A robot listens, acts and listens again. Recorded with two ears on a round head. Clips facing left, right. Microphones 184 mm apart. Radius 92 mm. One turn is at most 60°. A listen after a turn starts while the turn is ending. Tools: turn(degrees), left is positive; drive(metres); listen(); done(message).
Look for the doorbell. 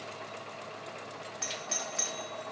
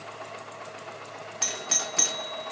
turn(degrees=-60)
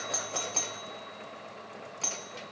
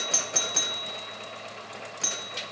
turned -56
turn(degrees=-20)
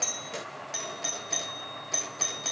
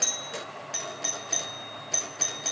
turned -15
done("Facing the doorbell.")